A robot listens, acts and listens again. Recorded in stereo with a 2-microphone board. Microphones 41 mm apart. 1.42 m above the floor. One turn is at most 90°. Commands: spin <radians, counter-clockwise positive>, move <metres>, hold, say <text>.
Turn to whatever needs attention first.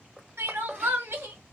spin -1.57
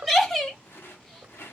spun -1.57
say Found it: crying, straight ahead.